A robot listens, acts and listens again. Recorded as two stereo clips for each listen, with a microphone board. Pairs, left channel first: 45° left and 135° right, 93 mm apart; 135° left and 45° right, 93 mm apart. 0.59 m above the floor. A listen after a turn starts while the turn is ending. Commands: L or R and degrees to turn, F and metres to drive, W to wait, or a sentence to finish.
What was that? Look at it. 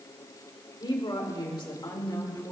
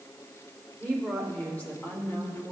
L80
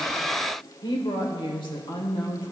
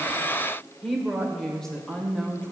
L60
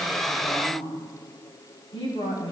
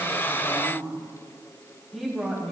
L45
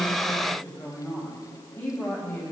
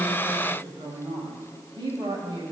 R25
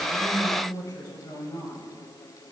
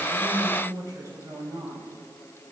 Found it: a woman speaking, straight ahead.